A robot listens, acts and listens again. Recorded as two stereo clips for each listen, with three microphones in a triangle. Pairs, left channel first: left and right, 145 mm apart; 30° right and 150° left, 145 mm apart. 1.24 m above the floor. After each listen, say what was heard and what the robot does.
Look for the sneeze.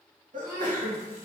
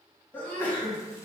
The sneeze: 110° right. Turn 110° right.
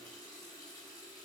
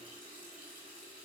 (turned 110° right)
I heard a sneeze from this way, but can't make it out now.